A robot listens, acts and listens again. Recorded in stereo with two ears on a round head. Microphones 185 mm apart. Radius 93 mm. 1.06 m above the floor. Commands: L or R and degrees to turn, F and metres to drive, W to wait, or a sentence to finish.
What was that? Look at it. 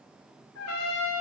L90
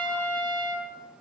L10
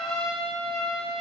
Found it: a trumpet, straight ahead, 2 to 4 m away.